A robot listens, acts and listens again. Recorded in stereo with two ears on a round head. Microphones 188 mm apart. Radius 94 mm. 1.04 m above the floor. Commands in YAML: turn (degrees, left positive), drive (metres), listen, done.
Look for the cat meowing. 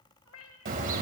turn: 70
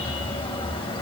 listen: true
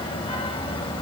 listen: true
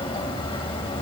done: "I heard a cat meowing, but can't make it out now. It was about straight ahead or 40° left."